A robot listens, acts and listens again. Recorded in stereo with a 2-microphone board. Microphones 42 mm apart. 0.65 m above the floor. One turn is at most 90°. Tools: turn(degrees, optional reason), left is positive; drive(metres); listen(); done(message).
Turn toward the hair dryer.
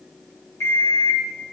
listen()
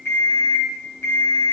listen()
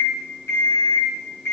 done("I can't make out a hair dryer to turn to.")